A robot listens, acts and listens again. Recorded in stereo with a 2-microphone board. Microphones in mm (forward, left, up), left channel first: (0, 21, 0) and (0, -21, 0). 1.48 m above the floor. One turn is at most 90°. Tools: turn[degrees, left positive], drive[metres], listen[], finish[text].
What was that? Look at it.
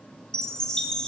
Thought: The chime: about 20° left or 160° left.
Action: turn[20]
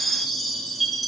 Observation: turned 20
Action: finish[Facing the chime, under 1 m away.]